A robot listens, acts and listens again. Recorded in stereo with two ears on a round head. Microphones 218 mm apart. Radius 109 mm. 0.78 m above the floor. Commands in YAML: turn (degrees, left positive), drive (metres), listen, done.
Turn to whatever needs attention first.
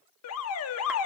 turn: 65
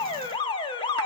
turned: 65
turn: 20
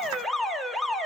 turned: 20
done: "Facing the alarm."